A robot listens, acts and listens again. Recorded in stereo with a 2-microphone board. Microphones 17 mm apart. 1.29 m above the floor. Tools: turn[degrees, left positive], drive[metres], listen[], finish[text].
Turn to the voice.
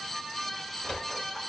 Action: listen[]
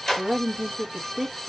Action: turn[-30]
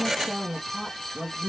Thought: So it is at 45° left.
Action: turn[45]
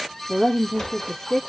Thought: The woman speaking is now 35° left.
Action: turn[35]
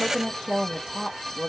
Thought: The woman speaking is now 20° left.
Action: turn[20]
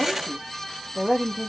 Action: finish[Found it: a woman speaking, straight ahead, 1 to 2 m away.]